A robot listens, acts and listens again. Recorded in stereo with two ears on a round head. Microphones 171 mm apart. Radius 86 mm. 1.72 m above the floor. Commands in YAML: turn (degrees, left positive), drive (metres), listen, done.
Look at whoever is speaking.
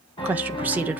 turn: -30
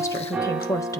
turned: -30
turn: 20
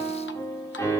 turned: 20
listen: true
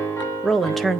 done: "Facing the woman speaking, 1 to 2 m away."